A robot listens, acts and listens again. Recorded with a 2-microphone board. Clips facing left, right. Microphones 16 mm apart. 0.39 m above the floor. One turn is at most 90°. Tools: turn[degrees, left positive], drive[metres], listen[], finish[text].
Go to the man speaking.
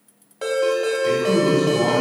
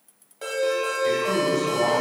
Thought: The man speaking: about 55° right or 125° right.
Action: turn[-55]
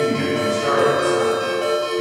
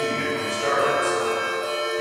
Thought: So it is at 20° right.
Action: turn[-20]
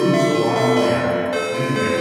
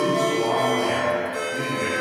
Thought: The man speaking is now 10° right.
Action: turn[-10]
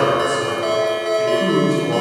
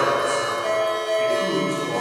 Action: drive[1.0]
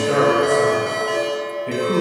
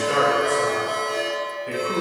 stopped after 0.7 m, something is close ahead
Action: finish[Arrived at the man speaking, straight ahead.]